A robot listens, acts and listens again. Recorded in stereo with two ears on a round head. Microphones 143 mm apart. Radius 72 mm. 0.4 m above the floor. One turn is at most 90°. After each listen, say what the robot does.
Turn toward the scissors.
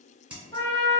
Turn 30° right.
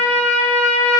Keep listening.
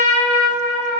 Keep listening.
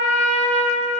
I heard scissors, but can't make it out now. It was about 20° left or 140° right.